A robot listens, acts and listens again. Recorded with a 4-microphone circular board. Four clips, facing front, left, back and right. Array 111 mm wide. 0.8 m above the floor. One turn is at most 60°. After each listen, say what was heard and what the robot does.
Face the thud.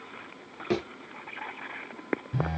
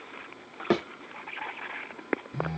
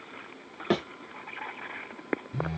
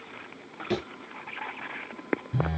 The thud: 115° left. Turn 60° left.
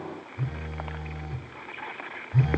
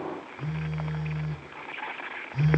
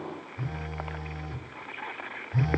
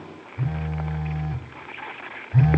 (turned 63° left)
Nothing new. It was at 50° left. Turn 50° left.
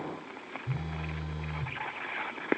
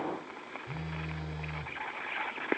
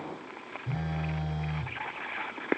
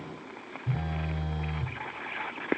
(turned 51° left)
Facing where the thud came from. I can't hear it now.